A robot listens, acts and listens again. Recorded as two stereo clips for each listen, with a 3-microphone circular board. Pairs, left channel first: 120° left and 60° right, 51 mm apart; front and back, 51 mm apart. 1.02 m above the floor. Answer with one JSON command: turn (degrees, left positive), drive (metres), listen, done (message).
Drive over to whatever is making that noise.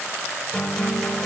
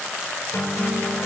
{"turn": 40}
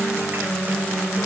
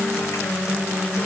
{"drive": 1.0}
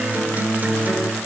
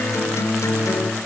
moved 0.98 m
{"drive": 1.0}
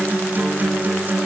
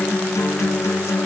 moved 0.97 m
{"drive": 1.0}
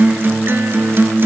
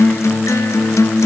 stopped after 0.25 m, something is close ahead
{"turn": -15}
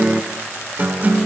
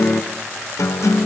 {"done": "I am next to the guitar."}